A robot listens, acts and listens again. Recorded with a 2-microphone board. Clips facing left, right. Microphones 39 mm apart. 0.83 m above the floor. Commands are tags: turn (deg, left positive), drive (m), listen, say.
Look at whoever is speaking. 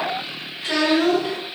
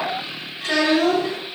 <turn deg="-60"/>
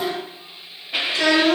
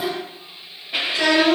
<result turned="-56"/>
<say>Facing the child speaking.</say>